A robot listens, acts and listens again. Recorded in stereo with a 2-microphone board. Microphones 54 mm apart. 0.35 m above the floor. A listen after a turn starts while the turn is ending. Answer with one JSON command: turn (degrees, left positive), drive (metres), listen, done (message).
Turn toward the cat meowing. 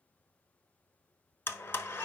{"listen": true}
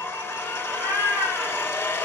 {"turn": -25}
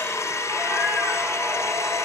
{"listen": true}
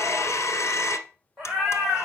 {"done": "Facing the cat meowing, over 4 m away."}